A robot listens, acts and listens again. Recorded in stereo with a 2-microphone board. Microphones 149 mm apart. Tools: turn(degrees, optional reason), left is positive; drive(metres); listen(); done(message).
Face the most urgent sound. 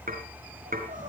turn(degrees=-60, reason="The crying: about 60° right or 120° right.")
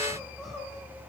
done("Facing the crying.")